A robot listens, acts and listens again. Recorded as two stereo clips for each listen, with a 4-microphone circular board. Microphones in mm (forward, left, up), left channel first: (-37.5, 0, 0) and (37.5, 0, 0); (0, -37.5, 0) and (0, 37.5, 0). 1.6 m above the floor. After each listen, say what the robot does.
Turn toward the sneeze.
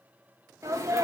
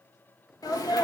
Turn 55° right.
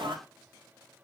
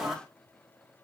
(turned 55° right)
Facing the sneeze.